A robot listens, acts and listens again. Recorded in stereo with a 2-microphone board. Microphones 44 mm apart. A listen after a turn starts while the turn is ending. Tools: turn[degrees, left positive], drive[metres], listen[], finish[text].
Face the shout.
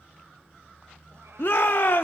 Thought: The shout: about 50° left or 130° left.
Action: turn[50]
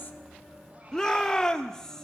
Thought: So it is at 15° left.
Action: turn[15]
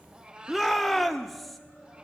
Action: finish[Found it: a shout, straight ahead.]